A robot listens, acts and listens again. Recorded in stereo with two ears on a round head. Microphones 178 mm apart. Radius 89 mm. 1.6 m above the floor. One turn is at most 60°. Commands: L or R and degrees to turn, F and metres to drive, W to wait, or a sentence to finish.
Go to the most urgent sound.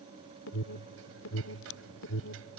L60
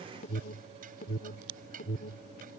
L40
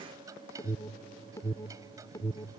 L15
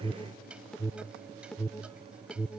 F1.0
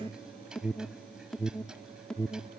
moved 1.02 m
F1.0
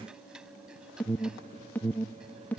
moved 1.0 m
L10
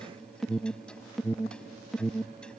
F1.0
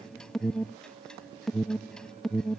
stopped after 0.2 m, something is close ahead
Arrived at the alarm, straight ahead.